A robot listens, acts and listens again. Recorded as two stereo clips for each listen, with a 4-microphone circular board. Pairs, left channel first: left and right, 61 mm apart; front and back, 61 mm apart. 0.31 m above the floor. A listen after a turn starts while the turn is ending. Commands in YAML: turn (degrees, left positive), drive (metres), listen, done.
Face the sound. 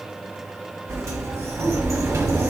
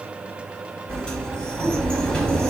turn: -70
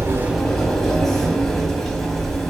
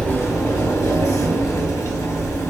turn: 10
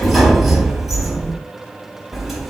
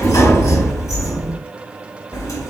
done: "Facing the sliding door, 1 to 2 m away."